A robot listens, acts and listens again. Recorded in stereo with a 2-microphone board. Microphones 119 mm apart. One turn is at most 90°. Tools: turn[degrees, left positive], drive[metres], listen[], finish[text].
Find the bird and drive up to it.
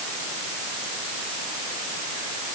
Action: listen[]
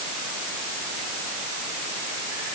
Action: listen[]
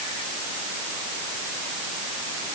Action: finish[I can't make out a bird to turn to.]